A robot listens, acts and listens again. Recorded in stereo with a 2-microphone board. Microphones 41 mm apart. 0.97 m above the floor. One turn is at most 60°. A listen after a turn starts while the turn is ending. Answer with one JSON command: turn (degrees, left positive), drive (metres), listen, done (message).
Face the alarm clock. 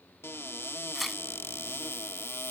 {"listen": true}
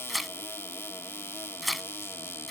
{"listen": true}
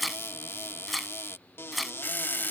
{"turn": 50}
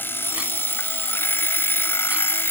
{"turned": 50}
{"turn": 60}
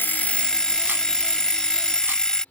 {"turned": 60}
{"turn": 20}
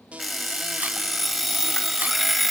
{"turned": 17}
{"done": "Found it: an alarm clock, straight ahead."}